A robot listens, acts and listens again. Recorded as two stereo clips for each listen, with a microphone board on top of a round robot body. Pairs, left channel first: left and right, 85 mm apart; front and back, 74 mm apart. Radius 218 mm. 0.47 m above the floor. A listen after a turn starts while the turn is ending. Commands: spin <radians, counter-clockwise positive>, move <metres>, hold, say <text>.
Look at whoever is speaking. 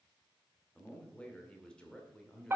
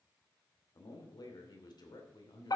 spin 0.17
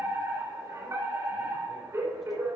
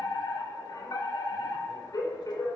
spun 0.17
hold
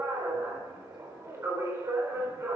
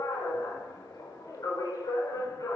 hold
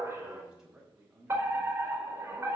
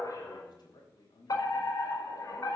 spin -0.17
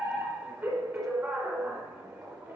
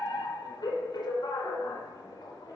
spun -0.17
hold
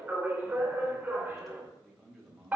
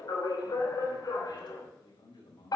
say Found it: a man speaking, straight ahead.